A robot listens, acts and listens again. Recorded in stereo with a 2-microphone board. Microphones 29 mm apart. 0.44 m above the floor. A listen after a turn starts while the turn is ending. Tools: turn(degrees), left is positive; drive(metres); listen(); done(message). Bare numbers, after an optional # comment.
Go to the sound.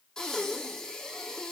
# The breathing: about 20° left or 160° left.
turn(20)
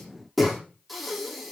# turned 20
drive(1.0)
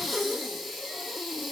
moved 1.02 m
drive(1.0)
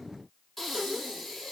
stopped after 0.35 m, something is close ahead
done("Something is in my way. I am facing the breathing but have not reached it.")